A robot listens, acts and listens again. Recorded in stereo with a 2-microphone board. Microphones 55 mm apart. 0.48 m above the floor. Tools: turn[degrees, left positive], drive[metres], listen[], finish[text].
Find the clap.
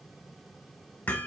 Action: listen[]
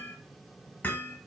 Action: listen[]
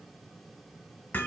Action: finish[I can't make out a clap, only hammering.]